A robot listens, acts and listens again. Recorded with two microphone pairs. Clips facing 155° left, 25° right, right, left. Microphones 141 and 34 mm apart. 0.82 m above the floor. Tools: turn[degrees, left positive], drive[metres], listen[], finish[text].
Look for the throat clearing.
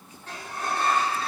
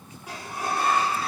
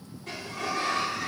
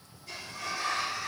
Action: listen[]
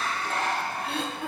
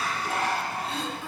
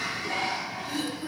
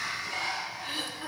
Thought: The throat clearing: 135° left.
Action: turn[135]
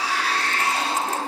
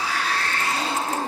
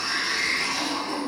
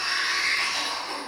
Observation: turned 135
Action: listen[]
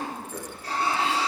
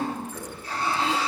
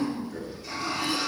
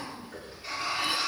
Thought: The throat clearing is now 25° left.
Action: turn[25]
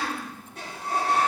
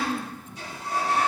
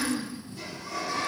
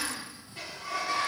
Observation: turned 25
Thought: The throat clearing is now 10° left.
Action: turn[10]
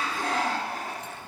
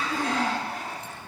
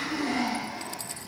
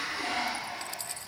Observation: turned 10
Action: listen[]
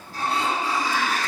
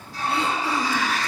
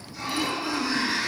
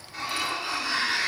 Action: listen[]
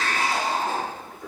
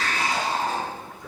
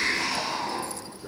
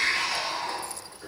Action: finish[I heard throat clearing from this way, but can't make it out now.]